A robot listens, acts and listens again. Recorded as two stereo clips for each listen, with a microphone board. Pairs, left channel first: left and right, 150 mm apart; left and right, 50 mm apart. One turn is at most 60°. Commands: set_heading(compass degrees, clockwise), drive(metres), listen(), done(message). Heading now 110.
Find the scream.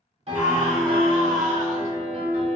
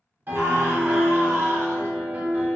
set_heading(170)
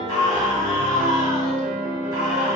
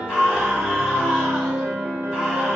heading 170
set_heading(195)
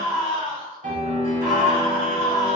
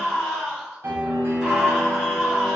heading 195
set_heading(210)
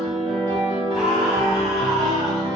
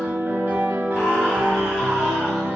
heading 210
listen()
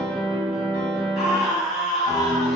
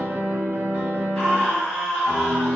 done("Facing the scream.")